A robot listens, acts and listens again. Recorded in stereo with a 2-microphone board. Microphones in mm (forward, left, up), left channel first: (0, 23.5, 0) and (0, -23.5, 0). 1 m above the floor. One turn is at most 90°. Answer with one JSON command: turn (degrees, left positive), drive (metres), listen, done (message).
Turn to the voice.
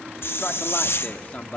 {"turn": 30}
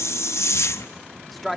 {"done": "Facing the man speaking, 1 to 2 m away."}